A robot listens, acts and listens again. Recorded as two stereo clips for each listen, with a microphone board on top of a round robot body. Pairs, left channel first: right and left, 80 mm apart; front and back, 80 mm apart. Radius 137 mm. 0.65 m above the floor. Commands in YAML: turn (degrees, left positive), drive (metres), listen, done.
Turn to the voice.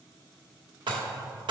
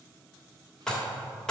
listen: true
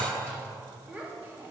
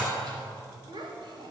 turn: 155
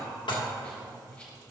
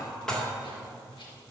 listen: true
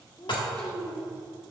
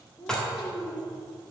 turn: -70
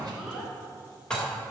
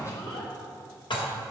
done: "Facing the child speaking, 1 to 2 m away."